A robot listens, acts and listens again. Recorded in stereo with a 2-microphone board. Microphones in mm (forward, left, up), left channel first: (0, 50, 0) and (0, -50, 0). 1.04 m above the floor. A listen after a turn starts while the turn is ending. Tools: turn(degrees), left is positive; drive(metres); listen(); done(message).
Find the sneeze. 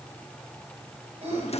turn(degrees=-90)
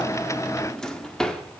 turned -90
done("Facing where the sneeze came from. I can't hear it now.")